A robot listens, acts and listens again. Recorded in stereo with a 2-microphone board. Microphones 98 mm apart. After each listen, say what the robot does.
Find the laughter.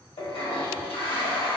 Keep listening.
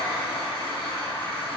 Keep listening.
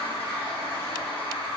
I can't make out laughter to turn to.